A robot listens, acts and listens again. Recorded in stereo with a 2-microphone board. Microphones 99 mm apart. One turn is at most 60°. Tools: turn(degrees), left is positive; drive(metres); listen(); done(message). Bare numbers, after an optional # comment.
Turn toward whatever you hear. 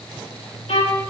turn(60)
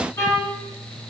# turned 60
# So it is at 30° left.
turn(30)
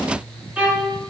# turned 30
# The violin is now 15° right.
turn(-15)
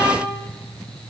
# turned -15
done("Facing the violin.")